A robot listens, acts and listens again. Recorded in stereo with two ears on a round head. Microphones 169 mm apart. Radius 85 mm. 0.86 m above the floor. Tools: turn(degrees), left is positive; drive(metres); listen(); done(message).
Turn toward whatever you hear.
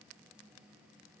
listen()
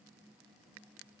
listen()
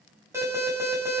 turn(degrees=-30)
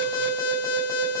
turn(degrees=15)
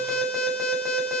done("Found it: an alarm, straight ahead.")